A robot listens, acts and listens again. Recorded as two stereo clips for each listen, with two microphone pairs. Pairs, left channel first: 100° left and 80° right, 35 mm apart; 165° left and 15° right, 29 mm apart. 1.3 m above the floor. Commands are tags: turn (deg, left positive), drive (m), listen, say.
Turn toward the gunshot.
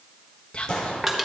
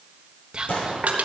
<turn deg="165"/>
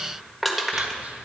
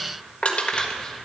<say>I heard a gunshot from this way, but can't make it out now.</say>